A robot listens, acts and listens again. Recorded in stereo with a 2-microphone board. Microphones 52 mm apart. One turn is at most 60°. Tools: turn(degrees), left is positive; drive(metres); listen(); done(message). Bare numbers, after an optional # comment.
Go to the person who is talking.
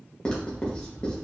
listen()
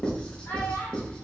# The child speaking: about 60° left or 120° left.
turn(60)
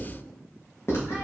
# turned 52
listen()
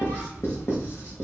listen()
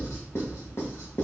done("I heard a child speaking, but can't make it out now. It was about 10° left or 65° left. I did not reach it.")